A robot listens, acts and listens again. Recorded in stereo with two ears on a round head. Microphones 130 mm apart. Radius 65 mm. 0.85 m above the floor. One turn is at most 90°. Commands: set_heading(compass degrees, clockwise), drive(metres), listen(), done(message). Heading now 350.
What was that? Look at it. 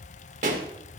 set_heading(40)
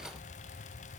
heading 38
listen()
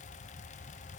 done("I heard a pop, but can't make it out now. It was about 5° right or 80° right.")